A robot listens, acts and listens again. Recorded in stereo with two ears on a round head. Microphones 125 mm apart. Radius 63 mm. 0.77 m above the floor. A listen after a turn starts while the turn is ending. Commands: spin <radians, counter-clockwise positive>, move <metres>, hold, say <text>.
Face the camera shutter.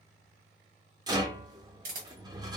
spin -1.13
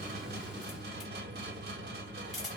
say Found it: a camera shutter, straight ahead, 1 to 2 m away.